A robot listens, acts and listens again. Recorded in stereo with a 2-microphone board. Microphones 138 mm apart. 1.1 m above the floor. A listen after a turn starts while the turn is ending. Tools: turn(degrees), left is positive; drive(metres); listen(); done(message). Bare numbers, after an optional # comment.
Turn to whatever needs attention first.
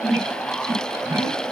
listen()
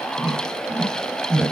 listen()
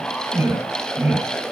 done("I can't make out anything urgent to turn to.")